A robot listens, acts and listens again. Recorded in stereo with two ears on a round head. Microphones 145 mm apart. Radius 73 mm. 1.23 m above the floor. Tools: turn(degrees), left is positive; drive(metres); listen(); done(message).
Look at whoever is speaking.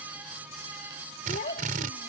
turn(degrees=50)
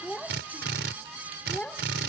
done("Found it: a child speaking, straight ahead.")